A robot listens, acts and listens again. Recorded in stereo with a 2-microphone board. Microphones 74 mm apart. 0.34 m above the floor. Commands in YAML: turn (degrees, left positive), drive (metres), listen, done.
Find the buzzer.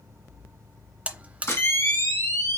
turn: -20
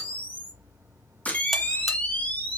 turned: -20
listen: true
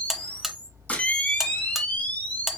done: "Facing the buzzer."